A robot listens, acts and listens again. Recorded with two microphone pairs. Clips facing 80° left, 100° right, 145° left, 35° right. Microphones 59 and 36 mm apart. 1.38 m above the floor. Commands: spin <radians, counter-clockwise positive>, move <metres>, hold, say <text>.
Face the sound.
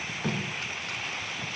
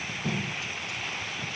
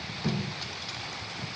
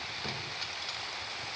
spin 0.87
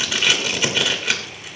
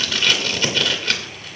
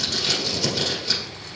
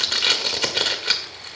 say Facing the tape being pulled.